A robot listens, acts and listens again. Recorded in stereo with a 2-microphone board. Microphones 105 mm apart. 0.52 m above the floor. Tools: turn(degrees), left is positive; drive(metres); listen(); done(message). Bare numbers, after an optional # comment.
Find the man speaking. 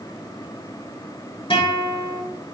listen()
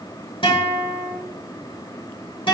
listen()
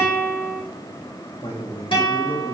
# The man speaking: about 75° left or 105° left.
turn(75)
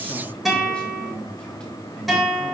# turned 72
# So it is at 10° left.
turn(10)
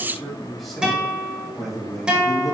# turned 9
done("Facing the man speaking.")